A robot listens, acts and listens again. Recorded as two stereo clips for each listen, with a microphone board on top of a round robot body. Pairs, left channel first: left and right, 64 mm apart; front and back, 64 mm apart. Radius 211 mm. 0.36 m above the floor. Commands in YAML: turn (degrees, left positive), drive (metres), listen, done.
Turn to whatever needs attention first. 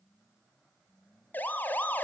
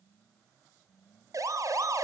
turn: 150
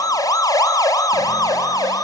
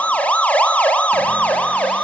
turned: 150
turn: 70
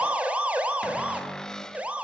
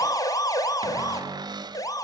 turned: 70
turn: -20
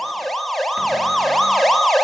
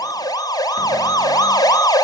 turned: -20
done: "Facing the siren."